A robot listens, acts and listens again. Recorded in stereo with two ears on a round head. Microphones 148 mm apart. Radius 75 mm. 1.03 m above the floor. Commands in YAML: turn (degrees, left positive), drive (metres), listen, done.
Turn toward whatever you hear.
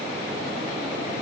listen: true
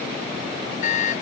turn: 50
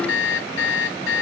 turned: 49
turn: 85
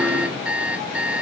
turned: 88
done: "Found it: an alarm clock, straight ahead."